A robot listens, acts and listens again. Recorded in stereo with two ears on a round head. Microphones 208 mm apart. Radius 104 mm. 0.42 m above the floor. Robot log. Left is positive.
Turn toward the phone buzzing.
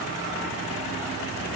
cmd idle
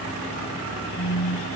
note: The phone buzzing: about 45° left or 135° left.
cmd yaw +45
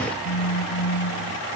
note: So it is at 85° left.
cmd yaw +85
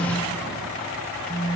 end: Facing the phone buzzing.